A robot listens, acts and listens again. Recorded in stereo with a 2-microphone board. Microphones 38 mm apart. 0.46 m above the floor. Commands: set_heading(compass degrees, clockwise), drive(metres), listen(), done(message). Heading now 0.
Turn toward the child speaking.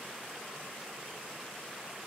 listen()
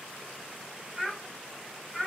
set_heading(30)
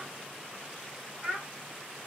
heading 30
set_heading(165)
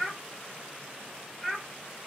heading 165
set_heading(155)
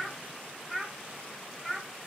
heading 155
done("Found it: a child speaking, straight ahead, 1 to 2 m away.")